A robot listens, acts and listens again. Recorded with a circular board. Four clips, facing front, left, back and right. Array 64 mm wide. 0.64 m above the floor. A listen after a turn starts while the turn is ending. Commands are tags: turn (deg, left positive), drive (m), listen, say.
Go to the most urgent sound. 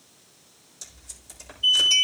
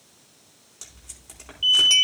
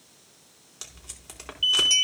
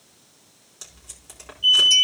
<turn deg="150"/>
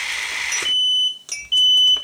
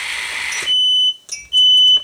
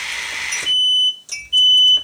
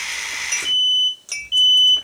<turn deg="-25"/>
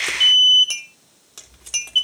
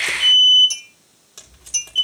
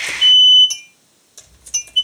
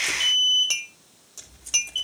<drive m="1.0"/>
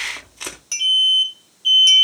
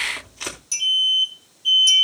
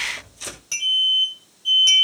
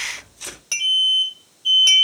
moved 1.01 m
<drive m="1.0"/>
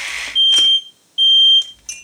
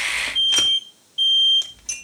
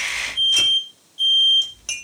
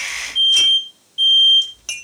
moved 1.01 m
<drive m="1.0"/>
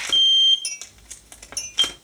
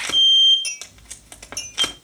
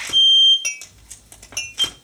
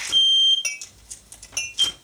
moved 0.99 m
<drive m="1.0"/>
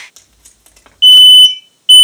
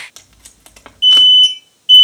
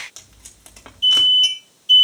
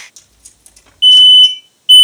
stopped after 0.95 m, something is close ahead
<turn deg="-20"/>
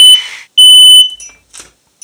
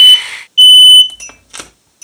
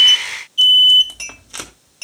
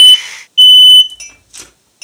<say>Arrived at the alarm, straight ahead.</say>